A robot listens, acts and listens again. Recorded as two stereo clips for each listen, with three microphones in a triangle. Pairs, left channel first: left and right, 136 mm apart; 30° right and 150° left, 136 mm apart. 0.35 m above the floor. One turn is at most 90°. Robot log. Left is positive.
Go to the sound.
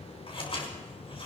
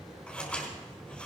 note: The scissors: 50° left.
cmd yaw +50
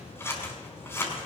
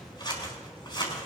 note: The scissors is now 20° left.
cmd yaw +20
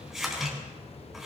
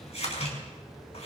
cmd fwd 1.0
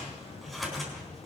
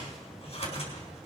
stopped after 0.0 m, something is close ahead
end: Blocked. The scissors is further on, straight ahead.